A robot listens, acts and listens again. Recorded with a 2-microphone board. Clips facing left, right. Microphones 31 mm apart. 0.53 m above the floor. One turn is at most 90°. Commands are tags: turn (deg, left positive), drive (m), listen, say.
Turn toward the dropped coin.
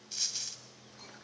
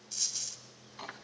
<turn deg="20"/>
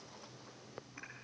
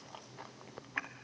<listen/>
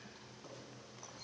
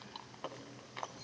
<say>I heard a dropped coin, but can't make it out now. It was about straight ahead or 140° left.</say>